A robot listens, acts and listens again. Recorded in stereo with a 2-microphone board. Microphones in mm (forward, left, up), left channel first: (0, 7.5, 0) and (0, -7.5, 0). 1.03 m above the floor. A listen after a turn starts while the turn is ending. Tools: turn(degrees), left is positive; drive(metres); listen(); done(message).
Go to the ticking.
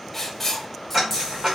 turn(degrees=-25)
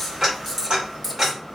turn(degrees=-130)
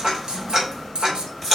turn(degrees=-50)
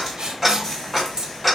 drive(metres=1.0)
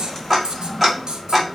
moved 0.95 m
turn(degrees=-10)
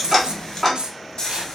drive(metres=1.0)
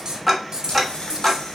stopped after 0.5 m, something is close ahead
done("I am next to the ticking.")